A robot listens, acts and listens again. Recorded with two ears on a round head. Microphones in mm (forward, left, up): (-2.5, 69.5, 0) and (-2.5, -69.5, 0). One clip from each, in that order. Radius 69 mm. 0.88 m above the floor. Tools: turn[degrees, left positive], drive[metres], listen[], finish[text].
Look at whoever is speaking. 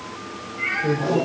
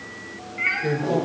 Thought: The man speaking: about 45° right or 135° right.
Action: turn[-45]
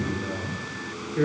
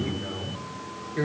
Thought: So it is at 110° right.
Action: turn[-110]
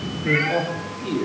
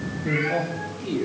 Thought: The man speaking is now 10° left.
Action: turn[10]
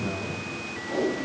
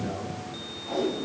Action: finish[Found it: a man speaking, straight ahead.]